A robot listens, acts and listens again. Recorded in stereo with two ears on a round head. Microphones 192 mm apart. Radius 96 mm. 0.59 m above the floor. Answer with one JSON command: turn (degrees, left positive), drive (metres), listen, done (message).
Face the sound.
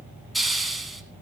{"turn": 30}
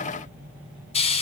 {"turn": 150}
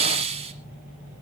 {"turn": -30}
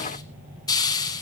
{"turn": 20}
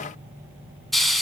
{"done": "Found it: a hiss, straight ahead."}